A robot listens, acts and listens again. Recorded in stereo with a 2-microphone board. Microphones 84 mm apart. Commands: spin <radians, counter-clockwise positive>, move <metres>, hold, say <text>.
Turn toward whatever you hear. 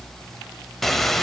spin 0.52
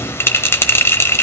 spin 2.53
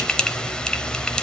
spin 0.17
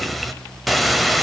say Found it: a bell, straight ahead, 1 to 2 m away.